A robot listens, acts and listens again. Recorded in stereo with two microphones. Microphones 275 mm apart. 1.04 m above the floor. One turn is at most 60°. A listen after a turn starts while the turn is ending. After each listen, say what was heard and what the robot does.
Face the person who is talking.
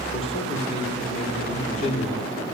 The man speaking: about 25° left or 155° left. Turn 25° left.
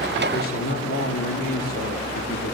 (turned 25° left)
So it is at 125° left. Turn 60° left.
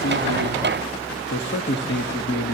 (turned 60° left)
The man speaking is now 35° left. Turn 35° left.
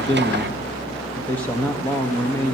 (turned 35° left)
Facing the man speaking, 1 to 2 m away.